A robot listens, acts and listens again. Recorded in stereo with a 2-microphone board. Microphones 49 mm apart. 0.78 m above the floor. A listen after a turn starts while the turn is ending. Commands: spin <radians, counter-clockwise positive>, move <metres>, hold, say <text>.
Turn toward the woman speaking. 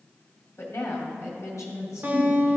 spin 1.22
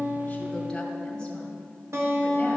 hold
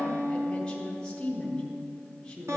spin 0.26
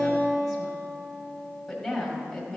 say Facing the woman speaking.